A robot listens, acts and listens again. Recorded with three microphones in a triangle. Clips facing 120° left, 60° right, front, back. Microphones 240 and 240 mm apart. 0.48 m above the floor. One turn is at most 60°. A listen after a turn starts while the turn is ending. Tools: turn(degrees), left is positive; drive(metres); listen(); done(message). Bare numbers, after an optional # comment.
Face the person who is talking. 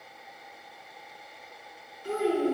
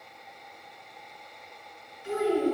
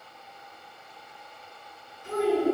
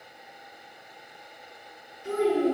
# The child speaking: 170° left.
turn(60)
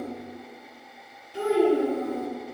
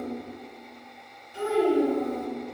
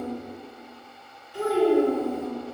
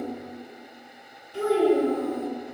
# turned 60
# The child speaking is now 110° left.
turn(60)
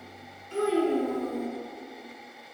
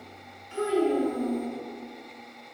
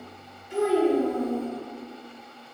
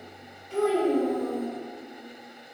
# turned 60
# The child speaking is now 75° left.
turn(60)
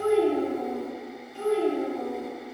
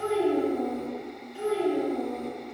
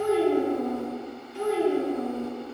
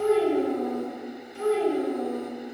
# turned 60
# The child speaking is now 20° left.
turn(20)
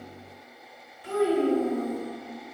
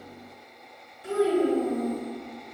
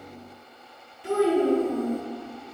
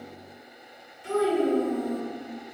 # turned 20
done("Facing the child speaking.")